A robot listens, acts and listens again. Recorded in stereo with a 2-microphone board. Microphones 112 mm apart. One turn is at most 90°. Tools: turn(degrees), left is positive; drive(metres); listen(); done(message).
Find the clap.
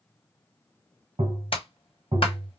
turn(degrees=55)
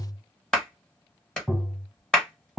done("Found it: a clap, straight ahead.")